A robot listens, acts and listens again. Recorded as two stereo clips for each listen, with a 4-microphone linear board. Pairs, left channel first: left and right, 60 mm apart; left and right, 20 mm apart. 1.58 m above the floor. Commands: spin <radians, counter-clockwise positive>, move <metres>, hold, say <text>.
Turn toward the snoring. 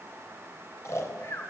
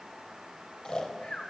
spin 0.87
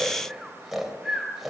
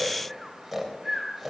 say Facing the snoring.